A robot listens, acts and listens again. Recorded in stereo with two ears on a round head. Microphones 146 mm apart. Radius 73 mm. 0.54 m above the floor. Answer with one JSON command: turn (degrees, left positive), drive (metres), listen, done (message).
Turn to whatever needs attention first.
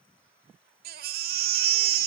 {"turn": -60}
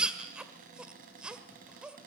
{"done": "Facing the baby crying."}